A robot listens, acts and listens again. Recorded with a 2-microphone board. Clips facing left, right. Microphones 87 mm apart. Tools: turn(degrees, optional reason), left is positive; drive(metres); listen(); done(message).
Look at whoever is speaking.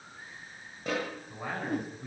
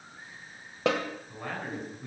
turn(degrees=30)
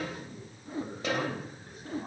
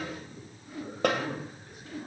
turn(degrees=140, reason="So it is at 140° left.")
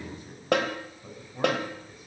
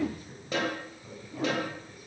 turn(degrees=25, reason="The man speaking is now 25° left.")
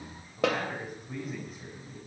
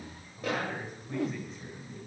done("Facing the man speaking.")